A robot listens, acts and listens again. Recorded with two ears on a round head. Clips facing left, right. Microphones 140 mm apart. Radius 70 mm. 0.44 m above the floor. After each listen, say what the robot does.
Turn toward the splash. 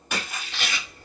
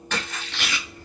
Turn 30° left.
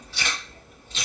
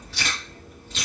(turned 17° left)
Keep listening.
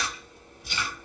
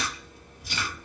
I heard a splash, but can't make it out now. It was about 5° right or 150° left.